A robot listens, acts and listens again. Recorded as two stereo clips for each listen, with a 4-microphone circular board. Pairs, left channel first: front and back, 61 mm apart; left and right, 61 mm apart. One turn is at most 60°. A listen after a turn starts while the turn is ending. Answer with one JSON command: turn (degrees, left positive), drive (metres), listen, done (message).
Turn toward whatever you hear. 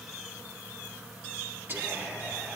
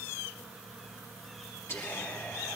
{"turn": 60}
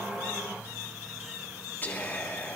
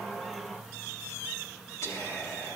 {"turn": 55}
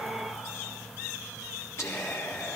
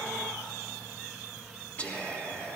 {"turn": 30}
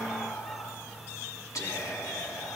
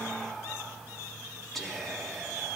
{"done": "Facing the whispering."}